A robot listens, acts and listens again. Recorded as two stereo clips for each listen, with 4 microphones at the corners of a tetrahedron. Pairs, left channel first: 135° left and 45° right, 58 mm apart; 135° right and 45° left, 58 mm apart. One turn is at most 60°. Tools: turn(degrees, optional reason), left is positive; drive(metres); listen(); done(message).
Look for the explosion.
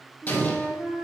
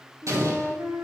turn(degrees=60, reason="The explosion: 70° left.")
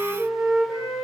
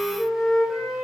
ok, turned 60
turn(degrees=10, reason="Nothing new. It was at 10° left.")
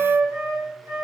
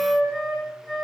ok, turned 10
done("Facing where the explosion came from. I can't hear it now.")